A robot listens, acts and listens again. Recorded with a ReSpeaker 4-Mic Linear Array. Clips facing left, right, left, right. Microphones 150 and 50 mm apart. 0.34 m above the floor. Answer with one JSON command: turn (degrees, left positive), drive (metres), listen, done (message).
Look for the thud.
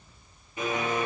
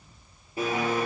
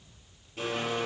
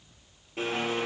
{"listen": true}
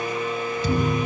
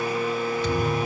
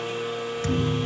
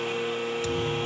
{"turn": 40}
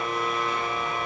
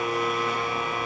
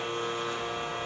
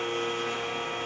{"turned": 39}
{"listen": true}
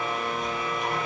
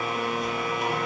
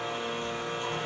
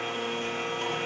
{"done": "I heard a thud, but can't make it out now. It was about 5° left or 100° left."}